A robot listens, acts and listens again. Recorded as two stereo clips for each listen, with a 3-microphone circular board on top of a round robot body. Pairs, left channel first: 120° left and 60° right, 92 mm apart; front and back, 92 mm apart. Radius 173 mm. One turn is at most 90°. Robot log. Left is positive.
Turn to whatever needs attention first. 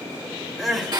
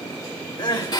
note: The crying: 30° left.
cmd yaw +30
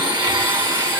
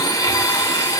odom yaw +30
cmd idle
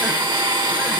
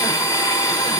cmd idle
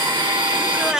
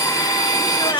note: The crying is now 20° left.
cmd yaw +20
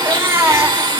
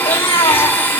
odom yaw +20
end: Found it: crying, straight ahead, 2 to 4 m away.